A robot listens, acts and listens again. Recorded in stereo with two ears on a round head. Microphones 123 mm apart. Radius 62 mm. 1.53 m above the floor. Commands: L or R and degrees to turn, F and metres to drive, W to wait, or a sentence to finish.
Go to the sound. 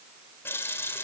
L15
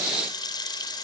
L150
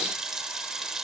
F1.0
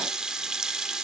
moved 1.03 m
F1.0
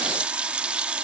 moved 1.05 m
R10
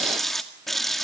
F1.0
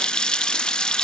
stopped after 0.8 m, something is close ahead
I am next to the running tap.